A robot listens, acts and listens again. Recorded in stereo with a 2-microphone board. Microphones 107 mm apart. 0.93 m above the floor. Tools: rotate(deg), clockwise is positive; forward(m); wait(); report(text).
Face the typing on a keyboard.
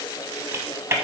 rotate(25)
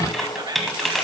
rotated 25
report("Found it: typing on a keyboard, straight ahead, 1 to 2 m away.")